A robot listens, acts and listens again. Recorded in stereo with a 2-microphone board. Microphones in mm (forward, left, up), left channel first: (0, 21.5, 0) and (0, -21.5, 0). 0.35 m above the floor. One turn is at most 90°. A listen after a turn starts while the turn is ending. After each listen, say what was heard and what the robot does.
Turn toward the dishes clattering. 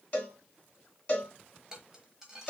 Turn 30° right.
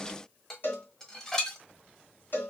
So it is at 15° left. Turn 15° left.
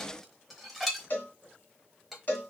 Facing the dishes clattering.